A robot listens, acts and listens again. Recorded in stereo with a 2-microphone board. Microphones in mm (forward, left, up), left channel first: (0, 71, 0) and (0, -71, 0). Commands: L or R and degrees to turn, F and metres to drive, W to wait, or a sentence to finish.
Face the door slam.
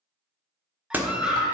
R30
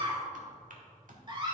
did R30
W
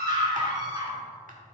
I heard a door slam, but can't make it out now. It was about 20° left or 140° right.